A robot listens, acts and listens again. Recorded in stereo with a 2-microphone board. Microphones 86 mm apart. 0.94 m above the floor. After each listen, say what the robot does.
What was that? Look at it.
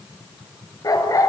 Turn 45° left.
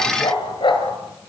Turn 105° left.
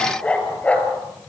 Turn 15° left.
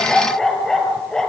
Found it: a dog barking, straight ahead.